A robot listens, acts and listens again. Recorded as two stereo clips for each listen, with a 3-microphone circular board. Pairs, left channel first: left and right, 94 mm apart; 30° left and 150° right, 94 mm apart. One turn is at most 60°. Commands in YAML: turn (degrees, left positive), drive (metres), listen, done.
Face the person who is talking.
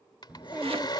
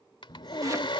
turn: -15
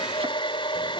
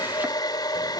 listen: true
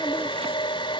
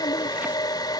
listen: true
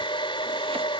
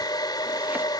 done: "I heard a child speaking from this way, but can't make it out now."